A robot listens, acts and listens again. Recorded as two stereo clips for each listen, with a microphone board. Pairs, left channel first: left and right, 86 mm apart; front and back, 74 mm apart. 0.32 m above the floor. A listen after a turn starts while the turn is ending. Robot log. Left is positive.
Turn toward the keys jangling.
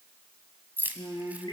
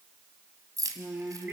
note: The keys jangling: 155° right.
cmd yaw -155
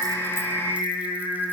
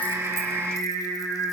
cmd idle
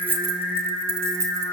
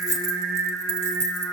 note: The keys jangling is now 45° right.
cmd yaw -45
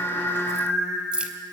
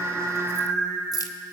note: The keys jangling is now 15° right.
cmd yaw -15
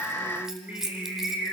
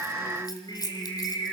end: Found it: keys jangling, straight ahead, 1 to 2 m away.